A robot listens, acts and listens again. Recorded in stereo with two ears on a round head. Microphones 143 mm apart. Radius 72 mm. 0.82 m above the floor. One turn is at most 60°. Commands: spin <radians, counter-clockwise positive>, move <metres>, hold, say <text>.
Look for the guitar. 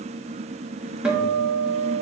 spin -0.52
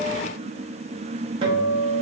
spin -1.05
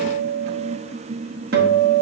spin -1.05
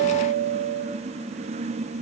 spin -1.05
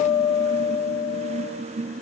spin -0.26
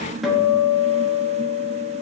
say Found it: a guitar, straight ahead, under 1 m away.